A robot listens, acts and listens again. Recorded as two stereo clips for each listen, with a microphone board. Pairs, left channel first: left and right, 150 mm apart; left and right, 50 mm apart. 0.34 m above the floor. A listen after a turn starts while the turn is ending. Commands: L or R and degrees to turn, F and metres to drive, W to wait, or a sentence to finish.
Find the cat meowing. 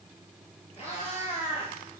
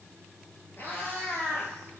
L40
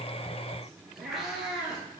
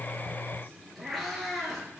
Found it: a cat meowing, straight ahead, 2 to 4 m away.